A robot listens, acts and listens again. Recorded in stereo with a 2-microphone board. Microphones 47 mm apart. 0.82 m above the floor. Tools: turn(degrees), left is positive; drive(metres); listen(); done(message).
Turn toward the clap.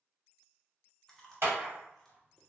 turn(degrees=-60)
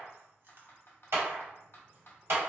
turn(degrees=-60)
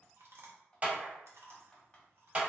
turn(degrees=-30)
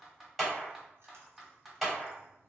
done("Found it: a clap, straight ahead, 1 to 2 m away.")